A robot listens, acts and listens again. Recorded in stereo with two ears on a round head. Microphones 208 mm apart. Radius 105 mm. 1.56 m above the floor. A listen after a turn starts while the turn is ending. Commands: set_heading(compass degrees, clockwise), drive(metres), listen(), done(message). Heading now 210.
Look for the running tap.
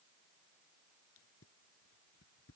listen()
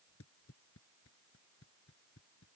listen()
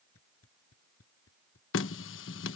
set_heading(155)
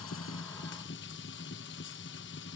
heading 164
set_heading(104)
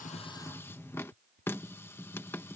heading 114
set_heading(104)
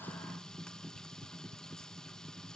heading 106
done("Found it: a running tap, straight ahead.")